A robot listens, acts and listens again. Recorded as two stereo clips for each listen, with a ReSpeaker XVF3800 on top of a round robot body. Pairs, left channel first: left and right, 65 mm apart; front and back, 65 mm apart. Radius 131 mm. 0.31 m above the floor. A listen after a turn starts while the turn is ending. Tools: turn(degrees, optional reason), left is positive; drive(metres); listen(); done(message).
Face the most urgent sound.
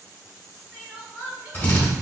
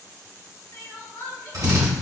turn(degrees=-15, reason="The crying: 15° right.")
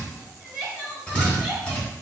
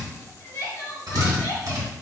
done("Found it: crying, straight ahead, 2 to 4 m away.")